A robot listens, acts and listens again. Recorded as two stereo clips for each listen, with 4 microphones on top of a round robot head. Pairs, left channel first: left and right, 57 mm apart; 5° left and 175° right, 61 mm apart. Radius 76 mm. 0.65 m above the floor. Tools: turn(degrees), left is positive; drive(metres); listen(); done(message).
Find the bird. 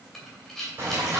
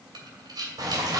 turn(degrees=-145)
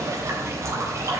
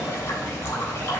turn(degrees=-50)
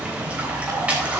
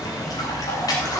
turn(degrees=-20)
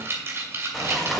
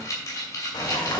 done("Facing the bird, 2 to 4 m away.")